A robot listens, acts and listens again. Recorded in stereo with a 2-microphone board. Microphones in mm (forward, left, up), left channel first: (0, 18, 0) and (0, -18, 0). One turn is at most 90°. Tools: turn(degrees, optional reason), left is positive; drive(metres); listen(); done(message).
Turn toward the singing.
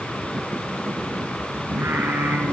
turn(degrees=-90)
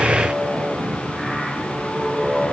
turn(degrees=-10, reason="So it is at 10° right.")
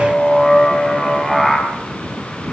done("Facing the singing, over 4 m away.")